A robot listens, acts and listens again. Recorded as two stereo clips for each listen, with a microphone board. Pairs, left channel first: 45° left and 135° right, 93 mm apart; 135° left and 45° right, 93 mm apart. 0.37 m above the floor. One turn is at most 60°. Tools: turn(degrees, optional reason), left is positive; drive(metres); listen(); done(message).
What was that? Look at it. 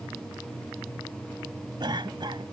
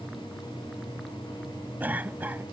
turn(degrees=-60, reason="The cough: 115° right.")
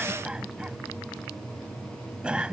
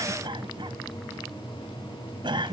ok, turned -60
turn(degrees=-60, reason="The cough is now 60° right.")
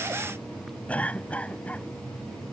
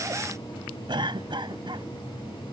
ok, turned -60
turn(degrees=-30, reason="The cough is now 30° right.")
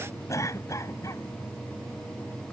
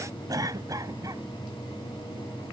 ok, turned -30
done("Facing the cough.")